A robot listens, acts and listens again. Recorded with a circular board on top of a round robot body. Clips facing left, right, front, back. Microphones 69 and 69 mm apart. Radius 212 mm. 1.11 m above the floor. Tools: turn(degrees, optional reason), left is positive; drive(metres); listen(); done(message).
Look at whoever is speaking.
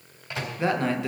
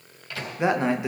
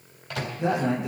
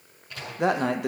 turn(degrees=-160, reason="The man speaking: 160° right.")
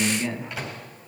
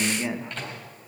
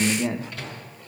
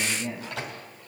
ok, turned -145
turn(degrees=-15, reason="The man speaking is now 15° right.")
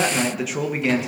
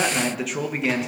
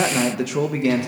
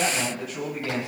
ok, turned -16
done("Found it: a man speaking, straight ahead.")